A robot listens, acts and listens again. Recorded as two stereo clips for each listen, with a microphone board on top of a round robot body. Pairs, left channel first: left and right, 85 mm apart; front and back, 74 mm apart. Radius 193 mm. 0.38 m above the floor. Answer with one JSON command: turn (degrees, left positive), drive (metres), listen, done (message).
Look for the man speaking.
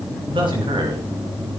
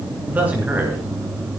{"turn": -110}
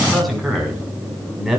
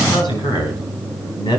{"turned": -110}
{"done": "Facing the man speaking, 2 to 4 m away."}